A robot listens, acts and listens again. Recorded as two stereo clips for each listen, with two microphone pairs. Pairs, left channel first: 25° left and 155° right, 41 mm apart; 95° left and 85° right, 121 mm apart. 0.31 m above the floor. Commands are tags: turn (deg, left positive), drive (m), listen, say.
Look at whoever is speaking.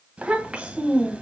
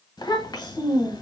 <turn deg="145"/>
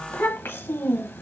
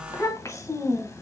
<turn deg="35"/>
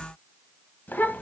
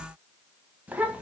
<turn deg="-10"/>
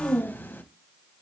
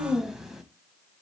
<say>Facing the child speaking, 1 to 2 m away.</say>